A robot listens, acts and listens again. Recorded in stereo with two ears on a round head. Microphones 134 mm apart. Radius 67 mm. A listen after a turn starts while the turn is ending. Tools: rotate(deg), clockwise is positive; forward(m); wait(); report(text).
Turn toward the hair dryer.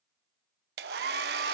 rotate(90)
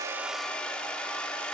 report("Facing the hair dryer.")